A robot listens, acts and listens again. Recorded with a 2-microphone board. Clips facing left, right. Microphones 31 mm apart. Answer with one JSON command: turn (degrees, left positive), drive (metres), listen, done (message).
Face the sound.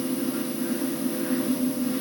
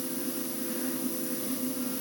{"listen": true}
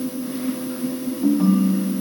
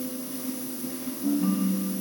{"turn": 90}
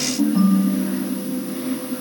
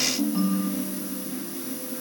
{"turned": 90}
{"done": "Found it: a ringtone, straight ahead, over 4 m away."}